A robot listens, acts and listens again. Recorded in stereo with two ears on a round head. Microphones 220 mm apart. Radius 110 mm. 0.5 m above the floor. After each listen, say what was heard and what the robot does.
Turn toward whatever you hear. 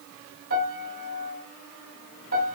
The piano: about 55° right or 125° right. Turn 55° right.
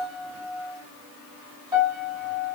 So it is at 15° right. Turn 15° right.
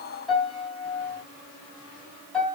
Facing the piano, 2 to 4 m away.